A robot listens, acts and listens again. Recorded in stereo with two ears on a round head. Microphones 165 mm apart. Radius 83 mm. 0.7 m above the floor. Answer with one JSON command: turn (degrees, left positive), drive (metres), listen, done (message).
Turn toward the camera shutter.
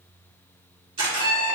{"turn": -30}
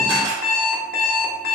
{"listen": true}
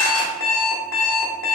{"listen": true}
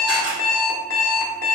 {"turn": -120}
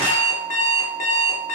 {"listen": true}
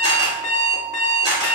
{"turn": -35}
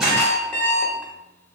{"done": "Facing the camera shutter, 2 to 4 m away."}